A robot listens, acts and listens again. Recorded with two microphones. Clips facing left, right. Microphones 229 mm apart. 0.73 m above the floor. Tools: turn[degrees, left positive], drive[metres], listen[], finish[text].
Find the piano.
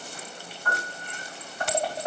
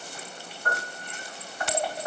Thought: The piano: about 60° right or 120° right.
Action: turn[-60]
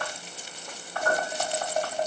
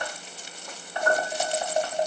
Thought: So it is at 10° right.
Action: turn[-10]
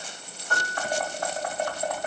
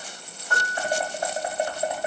Action: finish[Facing the piano.]